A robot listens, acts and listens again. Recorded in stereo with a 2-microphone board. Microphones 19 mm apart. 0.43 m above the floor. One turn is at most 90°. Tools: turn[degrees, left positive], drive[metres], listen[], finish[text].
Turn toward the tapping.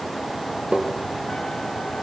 Action: turn[-90]
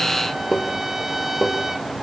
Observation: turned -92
Thought: So it is at 10° left.
Action: turn[10]
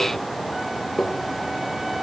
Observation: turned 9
Action: finish[Facing the tapping.]